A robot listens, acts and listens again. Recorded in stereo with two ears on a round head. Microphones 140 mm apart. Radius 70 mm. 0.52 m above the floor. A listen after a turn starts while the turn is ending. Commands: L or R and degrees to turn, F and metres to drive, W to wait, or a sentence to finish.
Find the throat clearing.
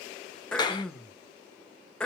L30
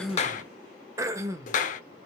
R25
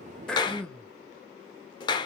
Found it: throat clearing, straight ahead, under 1 m away.